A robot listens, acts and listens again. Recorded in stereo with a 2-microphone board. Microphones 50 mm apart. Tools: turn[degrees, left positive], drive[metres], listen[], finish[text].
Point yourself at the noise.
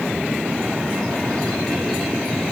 Action: listen[]
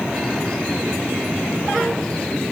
Action: listen[]
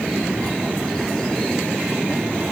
Action: finish[I can't make out anything to turn to.]